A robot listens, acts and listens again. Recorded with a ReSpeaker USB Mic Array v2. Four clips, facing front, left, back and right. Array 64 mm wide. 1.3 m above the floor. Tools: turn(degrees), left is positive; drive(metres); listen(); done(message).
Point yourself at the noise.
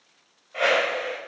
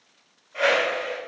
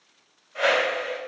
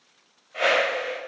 turn(degrees=-15)
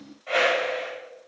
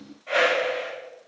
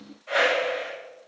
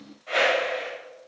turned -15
done("Facing the whoosh, 1 to 2 m away.")